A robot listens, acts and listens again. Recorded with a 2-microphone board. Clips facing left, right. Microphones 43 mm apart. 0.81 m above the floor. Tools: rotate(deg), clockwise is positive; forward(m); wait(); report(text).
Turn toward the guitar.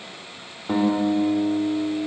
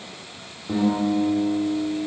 rotate(-55)
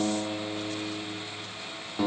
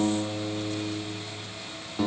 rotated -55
report("Facing the guitar.")